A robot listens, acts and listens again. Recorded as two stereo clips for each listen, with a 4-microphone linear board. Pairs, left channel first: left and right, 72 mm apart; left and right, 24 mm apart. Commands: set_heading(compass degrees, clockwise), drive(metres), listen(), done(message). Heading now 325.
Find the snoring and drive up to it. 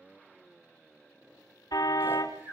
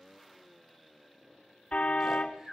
set_heading(350)
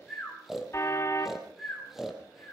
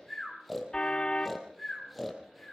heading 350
drive(1.0)
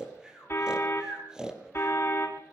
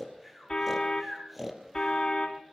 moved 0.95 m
set_heading(0)
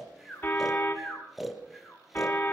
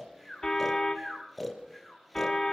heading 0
drive(1.0)
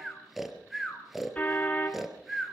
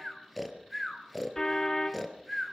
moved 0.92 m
drive(1.0)
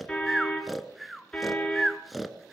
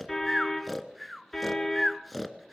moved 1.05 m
drive(1.0)
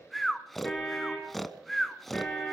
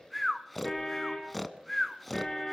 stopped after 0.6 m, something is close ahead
done("I am next to the snoring.")